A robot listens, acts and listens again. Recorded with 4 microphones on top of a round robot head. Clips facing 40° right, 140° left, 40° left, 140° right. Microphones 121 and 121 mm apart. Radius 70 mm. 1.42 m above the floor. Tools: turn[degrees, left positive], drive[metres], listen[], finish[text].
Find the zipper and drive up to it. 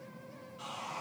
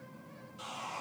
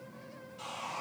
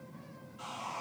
Action: listen[]
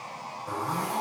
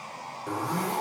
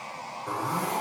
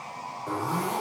Thought: The zipper: 135° left.
Action: turn[135]
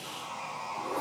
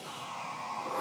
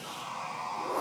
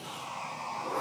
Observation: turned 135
Thought: The zipper is now 30° right.
Action: turn[-30]
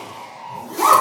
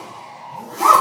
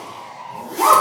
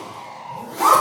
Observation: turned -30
Thought: The zipper is now 10° right.
Action: turn[-10]
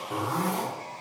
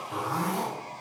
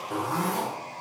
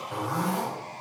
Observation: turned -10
Action: drive[1.0]
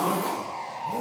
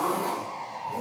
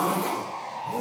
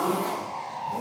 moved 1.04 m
Action: drive[1.0]
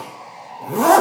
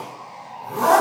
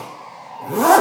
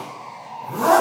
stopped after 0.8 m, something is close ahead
Action: finish[I am next to the zipper.]